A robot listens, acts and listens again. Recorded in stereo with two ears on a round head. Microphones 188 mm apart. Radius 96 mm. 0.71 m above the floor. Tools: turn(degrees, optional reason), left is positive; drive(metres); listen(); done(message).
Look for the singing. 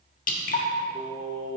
turn(degrees=50, reason="The singing: about 50° left or 130° left.")
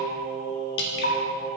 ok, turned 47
turn(degrees=20, reason="So it is at 20° left.")
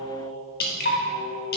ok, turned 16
turn(degrees=15, reason="The singing is now 15° left.")
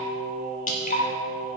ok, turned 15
done("Facing the singing.")